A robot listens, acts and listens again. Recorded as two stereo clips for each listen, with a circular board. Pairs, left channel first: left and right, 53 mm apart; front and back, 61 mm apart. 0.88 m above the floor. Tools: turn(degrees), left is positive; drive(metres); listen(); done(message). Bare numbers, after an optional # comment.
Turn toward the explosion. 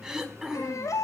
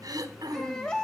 listen()
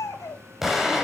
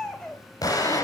done("Facing the explosion.")